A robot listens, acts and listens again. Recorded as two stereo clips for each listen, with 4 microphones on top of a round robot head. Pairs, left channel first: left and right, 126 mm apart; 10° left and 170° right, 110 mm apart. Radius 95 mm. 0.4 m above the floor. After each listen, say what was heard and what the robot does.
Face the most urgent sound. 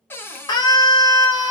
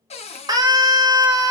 The scream: 145° left. Turn 145° left.
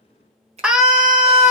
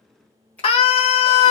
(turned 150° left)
Facing the scream.